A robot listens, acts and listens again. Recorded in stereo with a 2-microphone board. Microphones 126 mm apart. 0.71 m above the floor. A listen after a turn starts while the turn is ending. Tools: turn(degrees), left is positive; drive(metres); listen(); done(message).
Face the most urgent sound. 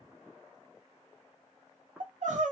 turn(degrees=-90)
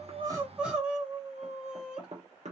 turn(degrees=-10)
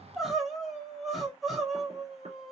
done("Found it: crying, straight ahead, 1 to 2 m away.")